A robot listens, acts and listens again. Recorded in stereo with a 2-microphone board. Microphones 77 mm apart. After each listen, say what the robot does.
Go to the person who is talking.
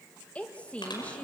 Turn 15° left.
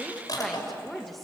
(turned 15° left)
Drive 1.0 m forward.
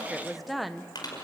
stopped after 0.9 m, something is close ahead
I am next to the woman speaking.